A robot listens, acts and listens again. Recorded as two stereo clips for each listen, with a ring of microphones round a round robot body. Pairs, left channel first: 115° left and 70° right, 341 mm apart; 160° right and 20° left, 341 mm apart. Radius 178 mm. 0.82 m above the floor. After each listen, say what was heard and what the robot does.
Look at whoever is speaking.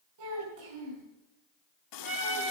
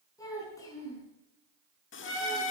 The child speaking: 75° right. Turn 75° right.
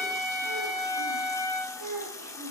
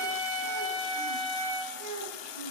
The child speaking is now 25° right. Turn 25° right.
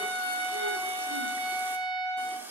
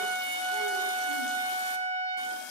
Keep listening.
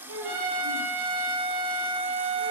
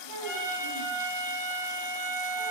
The child speaking is now 15° right. Turn 15° right.
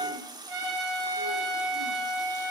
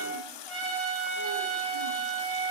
Keep listening.
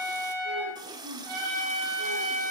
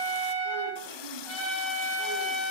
Keep listening.
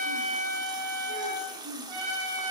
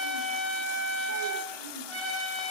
Facing where the child speaking came from. I can't hear it now.